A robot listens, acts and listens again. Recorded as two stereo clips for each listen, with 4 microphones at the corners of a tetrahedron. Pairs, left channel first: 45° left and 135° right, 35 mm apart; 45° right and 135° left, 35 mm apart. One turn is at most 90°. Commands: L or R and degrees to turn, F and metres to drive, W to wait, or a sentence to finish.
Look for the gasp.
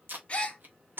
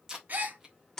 L90
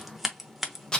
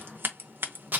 L10
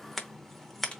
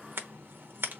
Facing where the gasp came from. I can't hear it now.